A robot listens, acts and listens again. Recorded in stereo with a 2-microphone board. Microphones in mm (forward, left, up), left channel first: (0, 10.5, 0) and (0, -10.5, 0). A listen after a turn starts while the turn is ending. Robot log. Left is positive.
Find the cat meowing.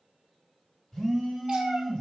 note: The cat meowing: about 50° right or 130° right.
cmd yaw -50
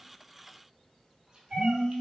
note: So it is at 50° right.
cmd yaw -50
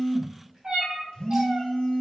note: The cat meowing is now 40° right.
cmd yaw -40
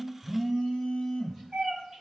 note: The cat meowing is now 15° right.
cmd yaw -15
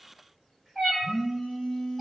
end: Facing the cat meowing.